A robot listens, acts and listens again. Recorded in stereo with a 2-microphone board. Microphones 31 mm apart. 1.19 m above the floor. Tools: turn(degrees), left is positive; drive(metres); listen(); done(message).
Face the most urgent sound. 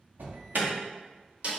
turn(degrees=-90)
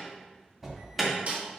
done("Found it: an alarm, straight ahead, 1 to 2 m away.")